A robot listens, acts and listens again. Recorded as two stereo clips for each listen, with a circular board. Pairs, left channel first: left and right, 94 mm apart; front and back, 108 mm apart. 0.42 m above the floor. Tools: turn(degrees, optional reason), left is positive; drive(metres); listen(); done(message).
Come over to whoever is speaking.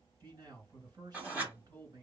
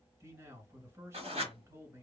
turn(degrees=-125, reason="The man speaking: 125° right.")
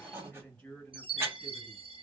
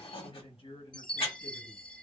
turn(degrees=10, reason="The man speaking is now 10° left.")
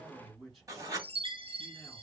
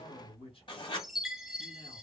drive(metres=1.0)
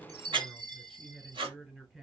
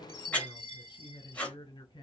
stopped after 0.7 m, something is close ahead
turn(degrees=-10, reason="The man speaking is now 10° right.")
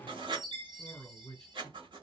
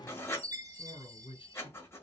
done("Arrived at the man speaking, straight ahead.")